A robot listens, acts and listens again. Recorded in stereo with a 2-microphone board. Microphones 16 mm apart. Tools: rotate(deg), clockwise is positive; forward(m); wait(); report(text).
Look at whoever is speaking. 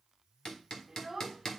rotate(30)
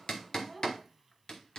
rotate(-20)
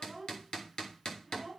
report("Facing the child speaking.")